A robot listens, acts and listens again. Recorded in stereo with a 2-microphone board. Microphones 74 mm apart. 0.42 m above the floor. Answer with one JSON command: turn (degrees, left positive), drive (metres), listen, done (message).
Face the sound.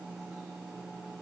{"listen": true}
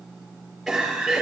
{"turn": -30}
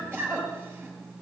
{"turn": -150}
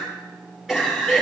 {"done": "Found it: a cough, straight ahead."}